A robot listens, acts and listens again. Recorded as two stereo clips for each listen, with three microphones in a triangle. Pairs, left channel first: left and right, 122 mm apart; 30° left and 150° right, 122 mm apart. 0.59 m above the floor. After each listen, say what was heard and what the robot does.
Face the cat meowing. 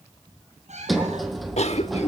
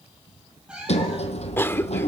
The cat meowing: 70° right. Turn 70° right.
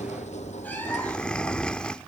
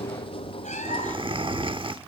Keep listening.
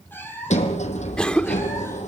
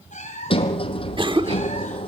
The cat meowing is now 15° left. Turn 15° left.
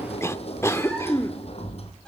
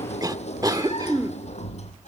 Keep listening.
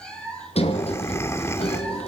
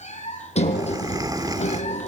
Found it: a cat meowing, straight ahead, over 4 m away.